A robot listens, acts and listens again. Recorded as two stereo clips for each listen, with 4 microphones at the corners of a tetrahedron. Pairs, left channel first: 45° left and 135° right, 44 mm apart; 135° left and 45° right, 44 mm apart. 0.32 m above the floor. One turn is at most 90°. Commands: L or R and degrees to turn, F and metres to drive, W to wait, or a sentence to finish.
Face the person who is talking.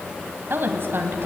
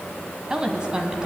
R90
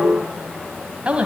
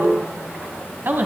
R75
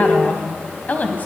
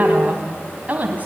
Facing the woman speaking, 2 to 4 m away.